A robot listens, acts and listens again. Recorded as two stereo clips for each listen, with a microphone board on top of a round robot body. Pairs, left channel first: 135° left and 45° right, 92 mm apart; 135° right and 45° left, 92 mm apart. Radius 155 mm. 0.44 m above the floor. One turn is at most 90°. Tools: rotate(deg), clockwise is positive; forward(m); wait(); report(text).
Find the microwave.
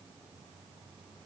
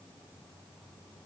wait()
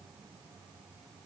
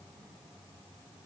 wait()
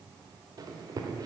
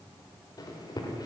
rotate(90)
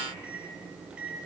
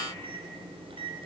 rotate(-35)
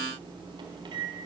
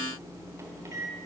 rotate(10)
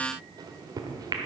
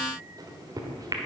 report("Found it: a microwave, straight ahead.")